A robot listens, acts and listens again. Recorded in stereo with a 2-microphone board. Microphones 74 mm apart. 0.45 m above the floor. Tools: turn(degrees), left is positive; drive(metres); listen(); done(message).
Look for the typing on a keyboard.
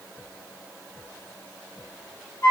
listen()
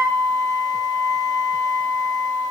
listen()
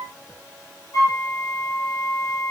done("I can't make out typing on a keyboard, only a flute.")